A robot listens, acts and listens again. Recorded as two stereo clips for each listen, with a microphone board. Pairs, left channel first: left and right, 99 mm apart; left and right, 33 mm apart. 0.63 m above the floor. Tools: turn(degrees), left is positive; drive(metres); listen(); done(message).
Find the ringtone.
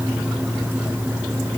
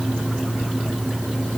listen()
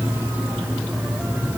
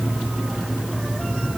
listen()
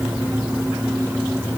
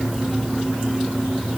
done("I can't make out a ringtone.")